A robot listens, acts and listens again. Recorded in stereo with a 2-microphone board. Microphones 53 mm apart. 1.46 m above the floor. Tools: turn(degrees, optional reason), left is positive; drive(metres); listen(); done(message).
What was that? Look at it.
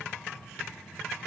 listen()
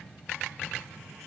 listen()
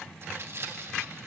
turn(degrees=-50, reason="The tearing paper: about 50° right or 130° right.")
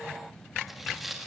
done("Found it: tearing paper, straight ahead, 1 to 2 m away.")